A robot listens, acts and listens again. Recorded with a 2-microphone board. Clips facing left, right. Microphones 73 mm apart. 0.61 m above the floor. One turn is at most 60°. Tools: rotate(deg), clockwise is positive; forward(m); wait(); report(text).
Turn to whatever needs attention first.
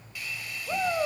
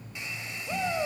rotate(-15)
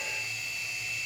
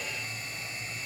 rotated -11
wait()
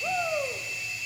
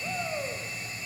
rotate(-60)
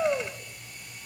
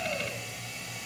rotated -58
rotate(-60)
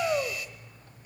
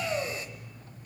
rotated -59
rotate(-35)
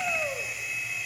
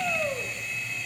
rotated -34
report("Found it: a shout, straight ahead.")